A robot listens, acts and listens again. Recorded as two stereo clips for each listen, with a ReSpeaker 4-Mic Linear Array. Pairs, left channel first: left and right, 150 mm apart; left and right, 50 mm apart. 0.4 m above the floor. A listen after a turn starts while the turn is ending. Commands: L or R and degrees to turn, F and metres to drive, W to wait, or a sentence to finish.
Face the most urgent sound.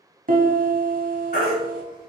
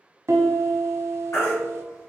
L70
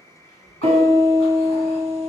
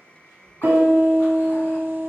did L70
W
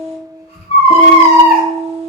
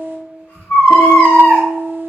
L40
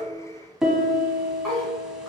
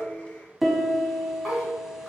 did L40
W
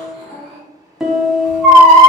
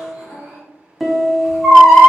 Found it: a baby crying, straight ahead, 1 to 2 m away.